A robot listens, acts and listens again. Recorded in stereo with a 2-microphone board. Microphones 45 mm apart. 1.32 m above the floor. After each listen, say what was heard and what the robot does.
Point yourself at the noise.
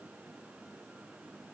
Keep listening.
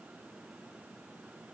Keep listening.
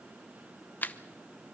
The camera shutter: about 40° left or 140° left. Turn 40° left.
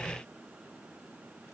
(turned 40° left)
Keep listening.
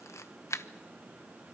So it is at 95° left. Turn 95° left.
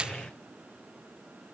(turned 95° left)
The camera shutter is now 20° right. Turn 20° right.
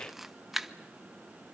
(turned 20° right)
Found it: a camera shutter, straight ahead.